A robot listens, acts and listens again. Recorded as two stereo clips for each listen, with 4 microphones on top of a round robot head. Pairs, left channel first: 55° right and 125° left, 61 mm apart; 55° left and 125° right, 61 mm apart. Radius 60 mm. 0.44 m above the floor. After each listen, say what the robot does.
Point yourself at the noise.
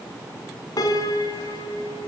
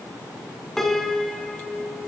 Turn 30° right.
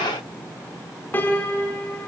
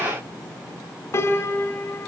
Turn 10° left.
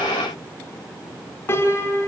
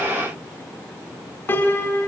Found it: a piano, straight ahead.